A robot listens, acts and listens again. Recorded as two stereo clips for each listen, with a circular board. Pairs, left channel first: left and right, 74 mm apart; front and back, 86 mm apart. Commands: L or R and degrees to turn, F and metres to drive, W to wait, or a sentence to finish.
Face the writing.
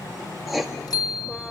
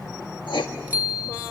Found it: writing, straight ahead.